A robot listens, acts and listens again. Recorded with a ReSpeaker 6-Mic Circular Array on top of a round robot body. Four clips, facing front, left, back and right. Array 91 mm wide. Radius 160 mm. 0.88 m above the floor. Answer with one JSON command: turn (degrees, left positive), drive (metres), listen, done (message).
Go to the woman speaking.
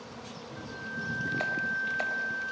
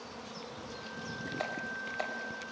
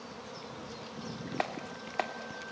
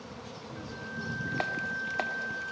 {"listen": true}
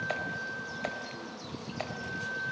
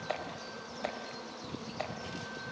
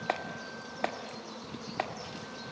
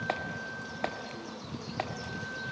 {"listen": true}
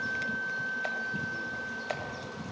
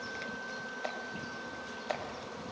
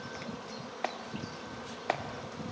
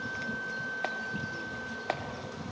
{"done": "I can't make out a woman speaking to turn to."}